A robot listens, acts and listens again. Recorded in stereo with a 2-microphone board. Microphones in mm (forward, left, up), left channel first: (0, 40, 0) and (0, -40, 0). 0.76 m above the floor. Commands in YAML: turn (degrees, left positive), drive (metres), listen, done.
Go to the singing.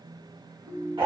listen: true
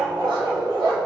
listen: true
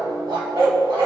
done: "I can't make out singing, only a ringtone and a dog barking."